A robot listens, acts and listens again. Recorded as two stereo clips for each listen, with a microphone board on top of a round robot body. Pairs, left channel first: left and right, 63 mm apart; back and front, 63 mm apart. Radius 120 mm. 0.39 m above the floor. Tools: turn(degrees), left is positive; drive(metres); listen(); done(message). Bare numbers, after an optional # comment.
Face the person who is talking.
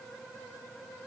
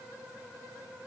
listen()
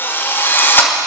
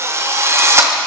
listen()
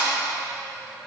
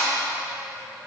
done("I can't make out anyone speaking to turn to.")